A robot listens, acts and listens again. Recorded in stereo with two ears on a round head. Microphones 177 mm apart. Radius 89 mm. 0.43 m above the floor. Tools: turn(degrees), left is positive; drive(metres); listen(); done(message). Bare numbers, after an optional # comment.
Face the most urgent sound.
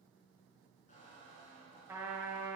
listen()
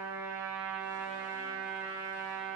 listen()
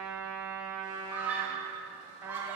turn(-30)
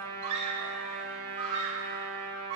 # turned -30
# So it is at 140° right.
turn(-140)
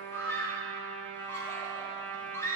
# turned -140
# The scream is now 15° left.
turn(15)
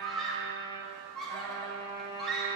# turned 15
done("Found it: a scream, straight ahead, 1 to 2 m away.")